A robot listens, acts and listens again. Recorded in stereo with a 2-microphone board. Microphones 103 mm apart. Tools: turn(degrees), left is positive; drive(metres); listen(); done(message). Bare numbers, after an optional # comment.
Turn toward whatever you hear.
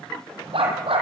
# The dog barking: about 60° right or 120° right.
turn(-60)
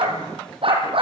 # So it is at 60° right.
turn(-60)
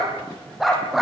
done("Found it: a dog barking, straight ahead, over 4 m away.")